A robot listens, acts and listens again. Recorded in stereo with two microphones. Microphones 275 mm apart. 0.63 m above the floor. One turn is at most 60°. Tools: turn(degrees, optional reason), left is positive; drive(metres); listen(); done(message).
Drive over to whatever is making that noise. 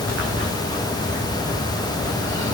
listen()
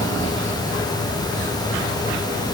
listen()
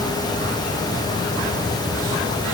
done("I can't make out anything to turn to.")